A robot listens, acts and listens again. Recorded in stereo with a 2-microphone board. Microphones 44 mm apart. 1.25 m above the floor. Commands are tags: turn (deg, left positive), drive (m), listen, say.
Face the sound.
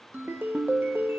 <turn deg="-55"/>
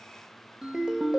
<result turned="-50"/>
<turn deg="-20"/>
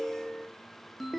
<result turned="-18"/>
<say>Facing the ringtone, under 1 m away.</say>